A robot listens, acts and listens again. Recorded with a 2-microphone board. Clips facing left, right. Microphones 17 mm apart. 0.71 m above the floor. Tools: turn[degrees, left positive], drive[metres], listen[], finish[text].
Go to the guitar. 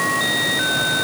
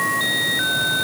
Action: listen[]
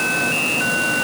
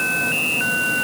Action: listen[]
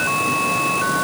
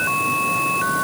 Action: finish[I can't make out a guitar.]